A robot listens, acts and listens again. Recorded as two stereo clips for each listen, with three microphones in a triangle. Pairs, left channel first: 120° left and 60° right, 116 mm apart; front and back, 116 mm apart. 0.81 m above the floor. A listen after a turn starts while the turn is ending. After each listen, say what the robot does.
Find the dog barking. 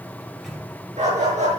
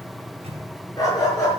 Turn 60° right.
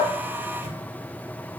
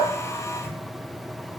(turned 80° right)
Turn 20° left.
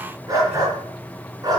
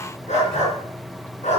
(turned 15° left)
Found it: a dog barking, straight ahead, over 4 m away.